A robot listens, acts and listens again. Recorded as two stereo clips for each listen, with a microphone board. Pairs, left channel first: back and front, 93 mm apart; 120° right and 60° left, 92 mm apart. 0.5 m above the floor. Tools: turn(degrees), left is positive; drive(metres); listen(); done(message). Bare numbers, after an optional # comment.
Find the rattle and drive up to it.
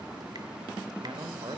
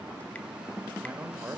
listen()
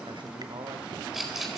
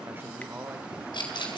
# The rattle: 85° right.
turn(-85)
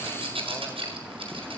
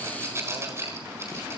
drive(1.0)
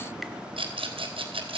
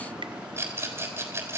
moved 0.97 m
drive(1.0)
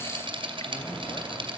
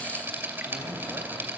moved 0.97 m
drive(1.0)
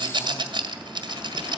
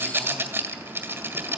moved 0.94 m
drive(1.0)
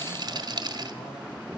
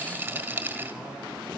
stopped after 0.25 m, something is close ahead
done("I am next to the rattle.")